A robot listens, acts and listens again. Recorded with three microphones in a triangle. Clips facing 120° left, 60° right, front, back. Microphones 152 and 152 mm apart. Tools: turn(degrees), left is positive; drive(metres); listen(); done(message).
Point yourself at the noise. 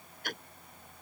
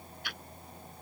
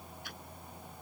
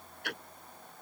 turn(degrees=165)
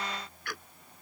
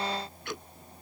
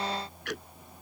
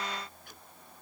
turn(degrees=10)
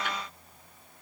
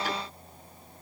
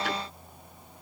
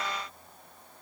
listen()
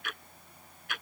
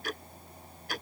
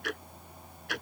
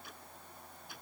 done("Found it: ticking, straight ahead.")